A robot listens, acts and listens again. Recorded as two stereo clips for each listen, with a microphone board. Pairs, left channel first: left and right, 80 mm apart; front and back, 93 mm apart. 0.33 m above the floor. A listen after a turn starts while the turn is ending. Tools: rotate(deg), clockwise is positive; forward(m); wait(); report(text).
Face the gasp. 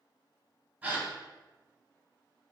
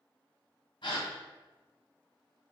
rotate(20)
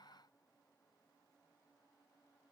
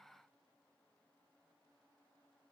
report("I heard a gasp from this way, but can't make it out now.")